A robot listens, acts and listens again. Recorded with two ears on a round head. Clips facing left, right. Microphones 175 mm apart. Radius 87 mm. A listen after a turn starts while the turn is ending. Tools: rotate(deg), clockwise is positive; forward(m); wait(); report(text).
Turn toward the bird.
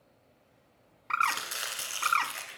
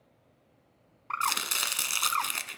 rotate(-20)
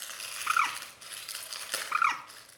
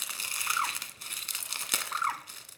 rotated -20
rotate(-135)
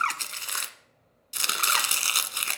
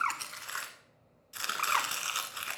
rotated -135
wait()
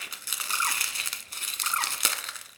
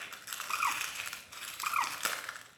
rotate(-15)
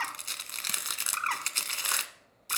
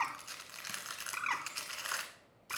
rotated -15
report("Found it: a bird, straight ahead.")